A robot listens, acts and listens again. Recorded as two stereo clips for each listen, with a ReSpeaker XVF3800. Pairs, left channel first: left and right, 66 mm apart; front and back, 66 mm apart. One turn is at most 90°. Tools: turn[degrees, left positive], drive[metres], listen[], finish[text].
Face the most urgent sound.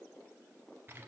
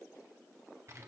Action: listen[]
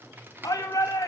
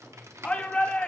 Thought: The shout: 70° left.
Action: turn[70]
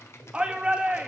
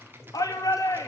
Thought: The shout is now 15° right.
Action: turn[-15]
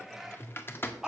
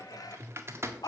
Action: finish[Facing the shout.]